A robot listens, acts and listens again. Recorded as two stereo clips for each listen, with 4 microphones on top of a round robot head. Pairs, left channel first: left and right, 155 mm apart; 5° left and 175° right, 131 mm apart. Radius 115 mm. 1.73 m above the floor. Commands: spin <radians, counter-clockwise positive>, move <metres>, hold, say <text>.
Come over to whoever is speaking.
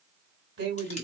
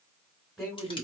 spin -1.48
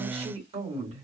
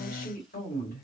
spin -0.70
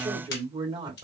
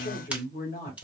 spin -0.52
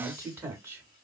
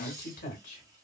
spin -0.26
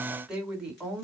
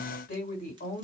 move 1.0
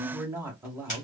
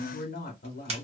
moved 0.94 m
spin -0.26
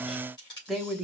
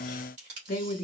move 1.0
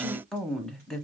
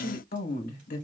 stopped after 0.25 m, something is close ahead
say I am next to the woman speaking.